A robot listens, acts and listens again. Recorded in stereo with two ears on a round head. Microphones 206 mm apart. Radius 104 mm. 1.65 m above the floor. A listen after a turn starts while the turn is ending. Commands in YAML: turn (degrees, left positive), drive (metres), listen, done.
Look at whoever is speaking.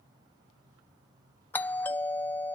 listen: true
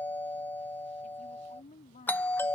turn: 30
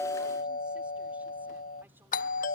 listen: true
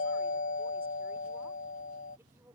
listen: true
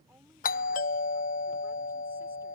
done: "I heard a woman speaking, but can't make it out now. It was about straight ahead or 120° left."